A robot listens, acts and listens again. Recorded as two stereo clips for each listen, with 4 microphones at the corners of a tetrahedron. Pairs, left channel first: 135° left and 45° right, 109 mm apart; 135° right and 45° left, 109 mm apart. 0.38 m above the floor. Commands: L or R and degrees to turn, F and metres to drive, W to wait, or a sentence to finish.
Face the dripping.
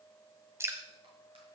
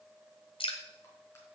R105
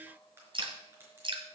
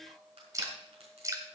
R15
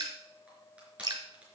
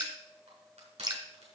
Facing the dripping.